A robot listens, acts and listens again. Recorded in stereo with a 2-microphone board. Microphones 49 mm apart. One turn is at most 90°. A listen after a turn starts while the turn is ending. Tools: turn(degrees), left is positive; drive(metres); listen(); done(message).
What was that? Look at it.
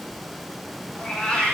turn(degrees=20)
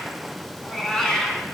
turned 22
turn(degrees=30)
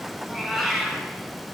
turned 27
done("Facing the cat meowing.")